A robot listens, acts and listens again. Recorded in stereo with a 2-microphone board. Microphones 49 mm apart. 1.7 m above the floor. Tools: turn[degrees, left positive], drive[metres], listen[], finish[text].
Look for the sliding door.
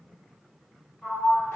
Thought: The sliding door: about 35° left or 145° left.
Action: turn[35]
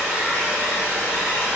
Action: listen[]
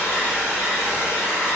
Action: listen[]
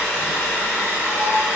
Action: finish[I heard a sliding door, but can't make it out now. It was about straight ahead or 110° left.]